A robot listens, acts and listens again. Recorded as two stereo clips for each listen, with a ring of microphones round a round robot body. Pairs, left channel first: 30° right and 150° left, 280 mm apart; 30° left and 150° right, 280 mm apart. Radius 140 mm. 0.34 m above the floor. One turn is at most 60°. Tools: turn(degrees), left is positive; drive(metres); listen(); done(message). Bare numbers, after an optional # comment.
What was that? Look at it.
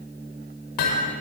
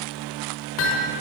# The hammering: 10° right.
turn(-10)
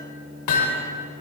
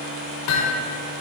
done("Found it: hammering, straight ahead, over 4 m away.")